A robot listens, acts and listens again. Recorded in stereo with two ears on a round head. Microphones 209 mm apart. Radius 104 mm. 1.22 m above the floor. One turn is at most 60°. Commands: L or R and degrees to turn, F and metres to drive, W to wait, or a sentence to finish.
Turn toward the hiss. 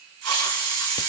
R60
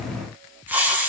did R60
R10
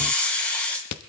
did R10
Facing the hiss.